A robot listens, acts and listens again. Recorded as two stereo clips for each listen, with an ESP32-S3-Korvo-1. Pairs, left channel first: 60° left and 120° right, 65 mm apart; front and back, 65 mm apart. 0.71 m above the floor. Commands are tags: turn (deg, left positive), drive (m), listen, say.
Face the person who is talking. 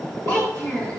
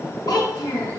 <turn deg="-20"/>
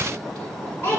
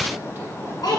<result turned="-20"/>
<turn deg="-10"/>
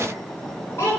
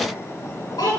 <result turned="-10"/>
<say>Found it: a child speaking, straight ahead, 2 to 4 m away.</say>